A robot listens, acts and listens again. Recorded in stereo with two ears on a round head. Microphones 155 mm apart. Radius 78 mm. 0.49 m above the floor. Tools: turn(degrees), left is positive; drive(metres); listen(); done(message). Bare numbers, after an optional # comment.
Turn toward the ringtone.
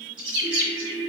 turn(-30)
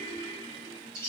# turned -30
# So it is at 25° left.
turn(25)
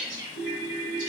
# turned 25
done("Facing the ringtone.")